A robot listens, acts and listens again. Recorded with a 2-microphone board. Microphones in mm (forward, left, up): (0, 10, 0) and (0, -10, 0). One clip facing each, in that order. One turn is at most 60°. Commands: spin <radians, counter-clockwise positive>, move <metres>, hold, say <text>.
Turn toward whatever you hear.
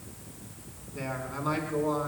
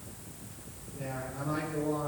spin 1.05
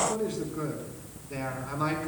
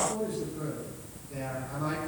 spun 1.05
spin 0.79
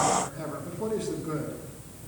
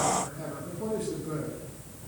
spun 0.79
spin 0.44
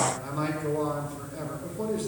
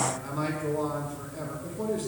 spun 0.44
say Facing the man speaking.